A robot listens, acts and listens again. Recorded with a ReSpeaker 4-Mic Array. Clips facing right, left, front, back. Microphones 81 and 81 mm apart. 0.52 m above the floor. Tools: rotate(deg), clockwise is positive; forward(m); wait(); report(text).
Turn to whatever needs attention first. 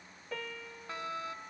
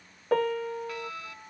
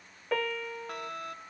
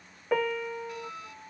rotate(30)
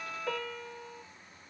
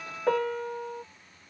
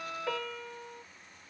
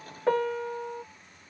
report("Facing the fire alarm.")